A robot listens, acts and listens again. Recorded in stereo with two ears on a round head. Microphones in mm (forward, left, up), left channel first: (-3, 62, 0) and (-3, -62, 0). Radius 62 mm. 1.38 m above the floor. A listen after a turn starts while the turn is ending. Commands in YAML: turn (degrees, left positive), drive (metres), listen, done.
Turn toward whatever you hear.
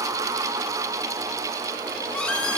turn: 30
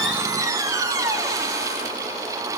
turn: -25
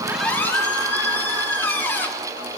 turn: 15
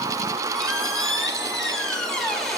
done: "Facing the squeak."